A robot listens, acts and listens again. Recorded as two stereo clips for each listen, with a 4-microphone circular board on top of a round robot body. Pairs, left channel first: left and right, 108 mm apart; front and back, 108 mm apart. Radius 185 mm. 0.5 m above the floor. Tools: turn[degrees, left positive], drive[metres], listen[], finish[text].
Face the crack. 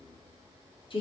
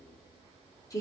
Action: listen[]
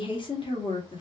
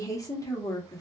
Action: listen[]
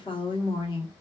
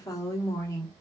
Action: finish[I can't make out a crack to turn to.]